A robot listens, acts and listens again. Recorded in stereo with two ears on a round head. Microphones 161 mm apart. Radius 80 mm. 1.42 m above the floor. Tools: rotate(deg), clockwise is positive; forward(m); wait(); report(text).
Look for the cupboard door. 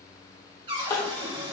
rotate(30)
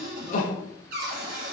rotate(120)
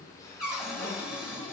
report("Facing the cupboard door, 2 to 4 m away.")